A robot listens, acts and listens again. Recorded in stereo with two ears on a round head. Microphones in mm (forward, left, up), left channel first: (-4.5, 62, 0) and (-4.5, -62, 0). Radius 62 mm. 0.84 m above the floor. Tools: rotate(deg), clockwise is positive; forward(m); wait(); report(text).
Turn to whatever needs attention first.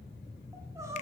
rotate(20)
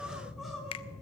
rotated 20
report("Found it: crying, straight ahead, over 4 m away.")